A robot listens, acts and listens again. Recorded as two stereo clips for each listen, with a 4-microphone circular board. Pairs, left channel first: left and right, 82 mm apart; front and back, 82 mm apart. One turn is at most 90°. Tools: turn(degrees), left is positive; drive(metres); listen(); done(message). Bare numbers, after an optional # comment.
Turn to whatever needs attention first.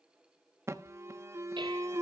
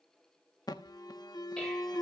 # The alarm: 35° right.
turn(-35)
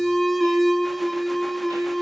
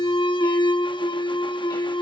done("Found it: an alarm, straight ahead.")